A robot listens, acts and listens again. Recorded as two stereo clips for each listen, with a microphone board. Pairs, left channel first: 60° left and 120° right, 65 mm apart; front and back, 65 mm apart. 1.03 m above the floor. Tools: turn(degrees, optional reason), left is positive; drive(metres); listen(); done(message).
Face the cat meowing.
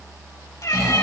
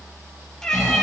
turn(degrees=80, reason="The cat meowing: 80° left.")
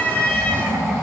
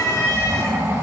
done("Facing the cat meowing.")